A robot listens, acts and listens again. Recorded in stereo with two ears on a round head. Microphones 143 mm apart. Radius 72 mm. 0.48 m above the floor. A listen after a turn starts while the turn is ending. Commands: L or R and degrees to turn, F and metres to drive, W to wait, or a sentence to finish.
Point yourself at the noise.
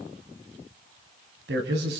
R75
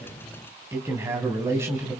R20
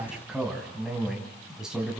Found it: a man speaking, straight ahead, 2 to 4 m away.